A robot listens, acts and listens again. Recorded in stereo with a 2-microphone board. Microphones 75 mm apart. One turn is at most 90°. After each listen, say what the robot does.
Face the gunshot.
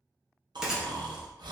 Turn 30° right.
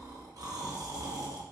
Keep listening.
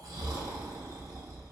I heard a gunshot, but can't make it out now. It was about 20° left or 140° right.